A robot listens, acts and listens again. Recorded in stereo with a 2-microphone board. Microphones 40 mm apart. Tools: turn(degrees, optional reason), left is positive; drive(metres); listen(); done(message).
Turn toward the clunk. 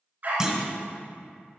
turn(degrees=-30)
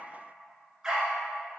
listen()
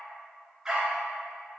done("I heard a clunk, but can't make it out now. It was about 15° left or 135° right.")